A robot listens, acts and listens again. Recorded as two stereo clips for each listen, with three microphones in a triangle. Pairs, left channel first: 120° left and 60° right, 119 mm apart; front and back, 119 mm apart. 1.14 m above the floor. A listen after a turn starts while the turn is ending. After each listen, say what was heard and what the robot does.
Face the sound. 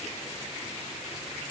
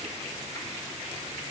Keep listening.
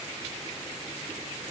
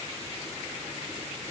Keep listening.
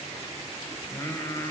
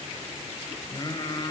The singing: 55° left. Turn 55° left.
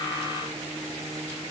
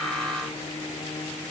Keep listening.
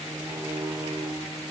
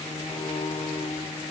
Found it: singing, straight ahead, 2 to 4 m away.